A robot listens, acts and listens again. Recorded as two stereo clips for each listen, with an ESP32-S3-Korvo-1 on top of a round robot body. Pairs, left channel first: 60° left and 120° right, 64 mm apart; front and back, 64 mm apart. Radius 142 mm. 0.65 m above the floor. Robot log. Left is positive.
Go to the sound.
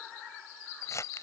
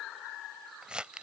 note: The crumpling: 105° left.
cmd yaw +105
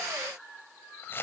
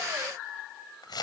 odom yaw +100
cmd fwd 1.0
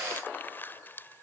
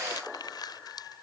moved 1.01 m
cmd fwd 1.0
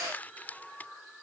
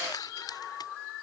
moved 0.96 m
cmd fwd 1.0
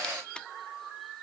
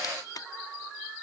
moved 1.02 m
note: The crumpling is now 15° right.
cmd yaw -15
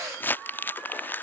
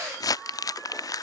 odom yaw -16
cmd fwd 1.0
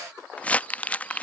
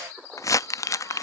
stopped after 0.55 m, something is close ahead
end: Arrived at the crumpling, straight ahead.